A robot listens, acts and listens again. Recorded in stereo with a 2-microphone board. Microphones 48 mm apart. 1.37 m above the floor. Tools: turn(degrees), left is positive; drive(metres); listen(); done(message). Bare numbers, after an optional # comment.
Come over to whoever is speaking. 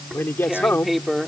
# The man speaking: about 45° left or 135° left.
turn(45)
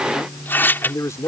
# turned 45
# So it is at 90° left.
turn(90)
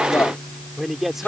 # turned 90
drive(1.0)
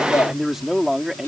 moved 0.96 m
drive(1.0)
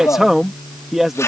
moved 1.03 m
drive(1.0)
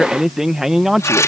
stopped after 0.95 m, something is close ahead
# The man speaking is now 10° right.
turn(-10)
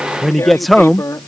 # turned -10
done("Arrived at the man speaking, straight ahead.")